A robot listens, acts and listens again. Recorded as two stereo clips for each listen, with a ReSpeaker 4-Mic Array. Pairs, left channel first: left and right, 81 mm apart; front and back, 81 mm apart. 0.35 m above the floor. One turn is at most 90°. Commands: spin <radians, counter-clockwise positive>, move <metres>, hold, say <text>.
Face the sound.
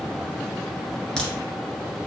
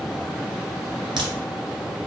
spin 1.57
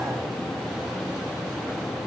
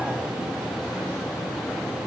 spin 1.31
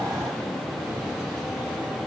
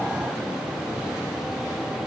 say I heard a crack from this way, but can't make it out now.